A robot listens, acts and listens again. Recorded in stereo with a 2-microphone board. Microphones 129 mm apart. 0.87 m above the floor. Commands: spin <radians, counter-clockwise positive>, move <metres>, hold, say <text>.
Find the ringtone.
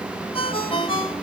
spin 0.79
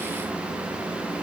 hold
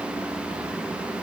hold
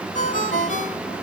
spin 1.48
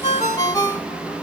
spin 0.52
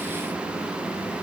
hold
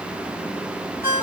spin -0.26
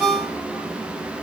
say Facing the ringtone, 2 to 4 m away.